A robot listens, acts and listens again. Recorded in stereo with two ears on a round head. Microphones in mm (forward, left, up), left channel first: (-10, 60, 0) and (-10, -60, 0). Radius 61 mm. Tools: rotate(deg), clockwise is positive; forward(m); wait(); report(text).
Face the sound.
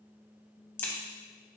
rotate(-15)
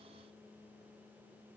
wait()
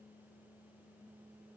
report("I heard a crack, but can't make it out now. It was about straight ahead or 150° left.")